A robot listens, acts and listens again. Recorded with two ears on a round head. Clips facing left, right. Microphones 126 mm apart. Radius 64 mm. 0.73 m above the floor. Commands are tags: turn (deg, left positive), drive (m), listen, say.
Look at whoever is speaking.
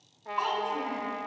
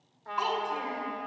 <turn deg="-15"/>
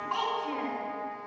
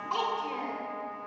<turn deg="-155"/>
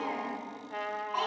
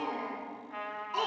<turn deg="-60"/>
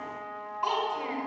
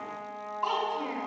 <say>Found it: a child speaking, straight ahead.</say>